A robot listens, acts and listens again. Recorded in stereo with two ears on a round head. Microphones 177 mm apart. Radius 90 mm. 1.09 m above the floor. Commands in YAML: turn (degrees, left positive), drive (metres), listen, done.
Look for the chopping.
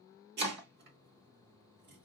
turn: -55
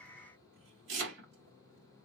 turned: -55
turn: -65
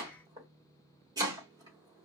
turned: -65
turn: -20
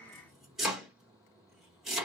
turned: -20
done: "Found it: chopping, straight ahead."